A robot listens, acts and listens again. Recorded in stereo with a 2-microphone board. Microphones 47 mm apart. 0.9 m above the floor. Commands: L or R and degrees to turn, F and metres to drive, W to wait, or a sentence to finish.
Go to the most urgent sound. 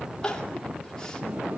L15
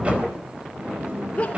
L150
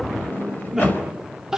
R10
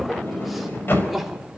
F1.0
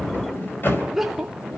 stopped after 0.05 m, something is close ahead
Something is in my way. I am facing the crying but have not reached it.